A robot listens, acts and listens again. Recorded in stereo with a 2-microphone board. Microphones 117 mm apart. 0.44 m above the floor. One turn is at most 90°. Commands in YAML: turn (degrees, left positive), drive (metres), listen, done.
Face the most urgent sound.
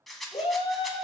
turn: 55
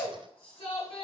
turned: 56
turn: 60
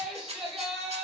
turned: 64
done: "Facing the shout."